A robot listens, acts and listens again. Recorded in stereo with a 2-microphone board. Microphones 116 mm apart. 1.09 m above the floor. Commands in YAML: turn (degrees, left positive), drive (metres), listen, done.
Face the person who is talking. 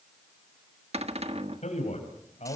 turn: 65
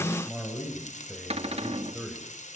turn: -10
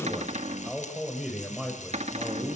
turn: -10
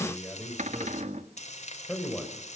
done: "Found it: a man speaking, straight ahead, over 4 m away."